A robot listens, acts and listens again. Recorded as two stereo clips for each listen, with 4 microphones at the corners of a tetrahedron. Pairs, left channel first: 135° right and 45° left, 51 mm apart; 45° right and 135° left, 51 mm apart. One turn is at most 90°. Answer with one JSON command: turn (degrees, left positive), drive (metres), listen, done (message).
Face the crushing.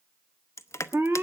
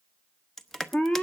{"turn": -90}
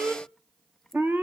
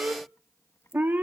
{"turn": -40}
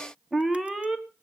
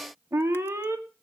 {"listen": true}
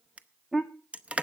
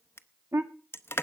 {"turn": -15}
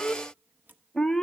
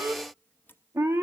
{"listen": true}
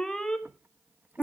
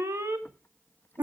{"listen": true}
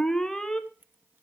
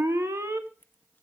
{"done": "I heard crushing from this way, but can't make it out now."}